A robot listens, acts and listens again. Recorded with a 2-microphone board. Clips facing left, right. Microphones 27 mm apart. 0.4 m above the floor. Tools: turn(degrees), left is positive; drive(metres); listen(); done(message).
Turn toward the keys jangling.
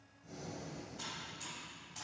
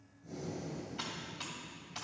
listen()
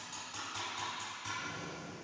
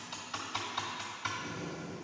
listen()
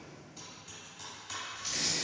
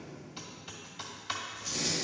turn(degrees=75)
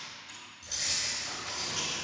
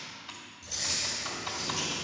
turn(degrees=25)
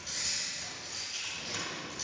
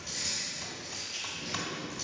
done("Found it: keys jangling, straight ahead, over 4 m away.")